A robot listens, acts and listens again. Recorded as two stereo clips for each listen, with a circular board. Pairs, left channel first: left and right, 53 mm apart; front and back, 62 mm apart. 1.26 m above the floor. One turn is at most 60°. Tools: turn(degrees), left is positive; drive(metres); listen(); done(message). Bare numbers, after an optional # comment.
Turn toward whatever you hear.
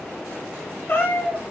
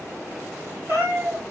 # The cat meowing: 135° left.
turn(60)
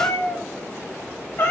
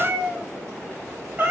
# The cat meowing is now 125° left.
turn(60)
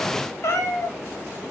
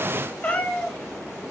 # The cat meowing is now 65° left.
turn(60)
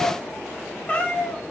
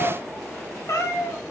# The cat meowing is now 25° left.
turn(25)
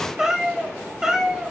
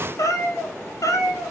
# The cat meowing is now 10° right.
turn(-10)
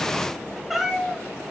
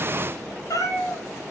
done("Facing the cat meowing.")